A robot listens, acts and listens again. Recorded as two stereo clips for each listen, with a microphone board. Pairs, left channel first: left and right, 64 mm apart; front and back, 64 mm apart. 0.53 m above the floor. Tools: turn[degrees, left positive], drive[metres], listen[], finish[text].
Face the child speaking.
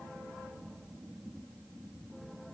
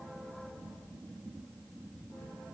Action: listen[]
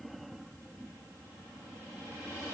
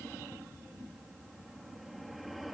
Action: listen[]
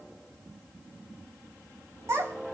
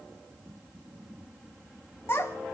Thought: The child speaking: 50° right.
Action: turn[-50]
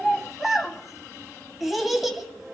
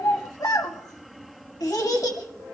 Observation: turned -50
Action: finish[Facing the child speaking, 1 to 2 m away.]